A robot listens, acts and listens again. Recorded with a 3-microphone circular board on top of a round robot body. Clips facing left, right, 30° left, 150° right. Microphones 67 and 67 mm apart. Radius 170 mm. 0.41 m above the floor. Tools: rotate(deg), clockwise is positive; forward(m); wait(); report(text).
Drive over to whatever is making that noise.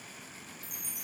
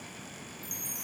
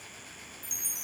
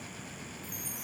rotate(-25)
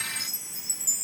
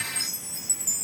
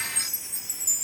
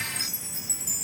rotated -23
forward(1.0)
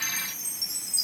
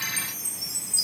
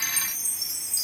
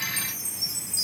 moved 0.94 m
forward(1.0)
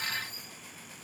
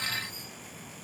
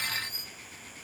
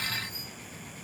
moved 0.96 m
forward(1.0)
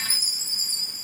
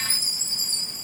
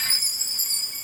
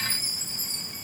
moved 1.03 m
rotate(-10)
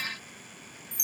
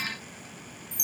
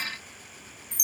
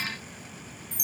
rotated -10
forward(1.0)
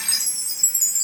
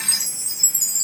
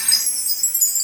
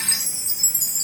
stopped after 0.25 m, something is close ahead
report("Arrived at the chime, straight ahead.")